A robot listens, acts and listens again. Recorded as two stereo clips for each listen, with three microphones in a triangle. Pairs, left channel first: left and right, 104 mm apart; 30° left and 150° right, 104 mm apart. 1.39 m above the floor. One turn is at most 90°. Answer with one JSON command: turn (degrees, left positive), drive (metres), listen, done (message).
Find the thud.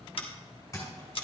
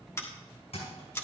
{"turn": 30}
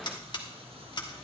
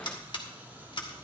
{"done": "I heard a thud from this way, but can't make it out now."}